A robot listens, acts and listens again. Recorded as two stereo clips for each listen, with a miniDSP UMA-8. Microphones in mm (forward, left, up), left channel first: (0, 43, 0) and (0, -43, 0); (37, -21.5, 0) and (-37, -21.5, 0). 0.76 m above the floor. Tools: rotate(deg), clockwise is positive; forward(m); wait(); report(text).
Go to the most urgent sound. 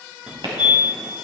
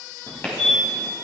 rotate(15)
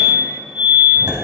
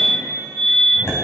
forward(1.0)
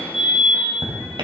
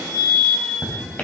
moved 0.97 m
forward(1.0)
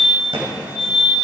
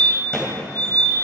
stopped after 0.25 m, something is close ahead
rotate(10)
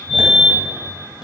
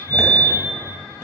report("I am next to the fire alarm.")